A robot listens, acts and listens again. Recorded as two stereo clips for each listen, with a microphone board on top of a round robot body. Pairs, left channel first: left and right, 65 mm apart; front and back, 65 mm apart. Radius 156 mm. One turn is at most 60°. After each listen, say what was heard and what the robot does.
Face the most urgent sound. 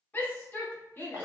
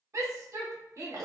The shout: 150° left. Turn 60° left.
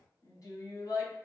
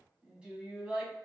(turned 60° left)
The shout is now 110° left. Turn 60° left.
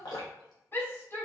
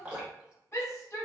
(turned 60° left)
The shout is now 45° left. Turn 45° left.
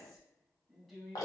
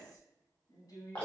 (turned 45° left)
Facing the shout.